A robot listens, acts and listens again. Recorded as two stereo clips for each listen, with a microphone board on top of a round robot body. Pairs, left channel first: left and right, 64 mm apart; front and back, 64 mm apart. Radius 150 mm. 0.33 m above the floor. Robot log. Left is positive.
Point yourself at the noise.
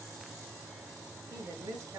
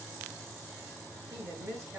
note: The woman speaking: 135° right.
cmd yaw -135
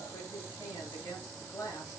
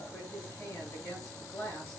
note: The woman speaking is now 40° left.
cmd yaw +40
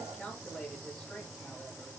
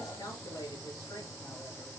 end: Found it: a woman speaking, straight ahead.